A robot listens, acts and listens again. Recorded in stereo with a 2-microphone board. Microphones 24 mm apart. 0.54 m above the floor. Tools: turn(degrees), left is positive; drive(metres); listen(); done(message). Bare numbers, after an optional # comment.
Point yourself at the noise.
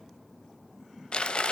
# The crumpling: about 50° left or 130° left.
turn(50)
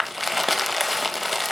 done("Found it: crumpling, straight ahead, under 1 m away.")